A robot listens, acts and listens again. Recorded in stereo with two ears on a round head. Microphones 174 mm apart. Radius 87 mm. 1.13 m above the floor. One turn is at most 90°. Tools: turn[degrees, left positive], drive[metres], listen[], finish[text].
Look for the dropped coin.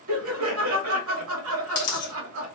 Thought: The dropped coin: about 40° left or 140° left.
Action: turn[40]
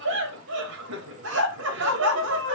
Action: listen[]
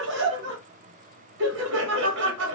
Action: finish[I heard a dropped coin, but can't make it out now. It was about straight ahead or 100° left.]